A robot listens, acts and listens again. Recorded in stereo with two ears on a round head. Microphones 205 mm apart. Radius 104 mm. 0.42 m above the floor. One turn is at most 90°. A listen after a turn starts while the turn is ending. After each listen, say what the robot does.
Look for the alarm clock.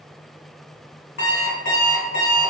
Turn 45° left.
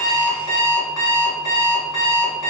Turn 85° left.
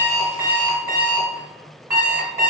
Turn 15° right.
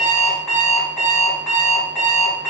Found it: an alarm clock, straight ahead, 1 to 2 m away.